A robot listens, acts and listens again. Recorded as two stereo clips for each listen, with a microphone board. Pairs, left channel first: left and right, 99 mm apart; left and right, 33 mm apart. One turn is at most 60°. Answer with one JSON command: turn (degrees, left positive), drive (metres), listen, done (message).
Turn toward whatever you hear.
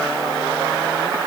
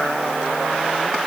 {"listen": true}
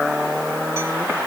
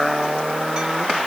{"listen": true}
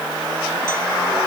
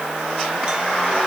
{"done": "I can't make out anything to turn to."}